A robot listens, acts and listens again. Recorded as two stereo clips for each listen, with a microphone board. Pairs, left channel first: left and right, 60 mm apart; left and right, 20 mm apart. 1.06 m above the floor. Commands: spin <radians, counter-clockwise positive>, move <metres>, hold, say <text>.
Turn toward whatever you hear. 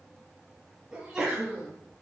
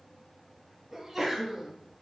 spin -0.52
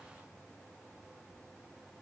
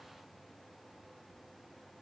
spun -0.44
hold
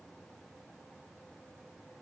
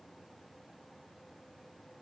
say I heard a sneeze, but can't make it out now. It was about 10° left or 140° right.